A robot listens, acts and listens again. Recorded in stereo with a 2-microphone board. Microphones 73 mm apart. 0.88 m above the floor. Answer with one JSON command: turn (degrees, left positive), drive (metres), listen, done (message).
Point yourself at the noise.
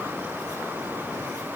{"listen": true}
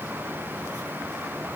{"listen": true}
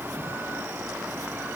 {"done": "I can't make out anything to turn to."}